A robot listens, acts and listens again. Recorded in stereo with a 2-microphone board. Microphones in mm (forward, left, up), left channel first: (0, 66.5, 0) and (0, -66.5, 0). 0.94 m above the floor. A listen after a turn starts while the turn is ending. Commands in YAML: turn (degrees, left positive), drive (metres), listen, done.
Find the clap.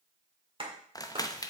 turn: -40
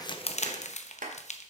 turn: -100
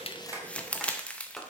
done: "Found it: a clap, straight ahead, 1 to 2 m away."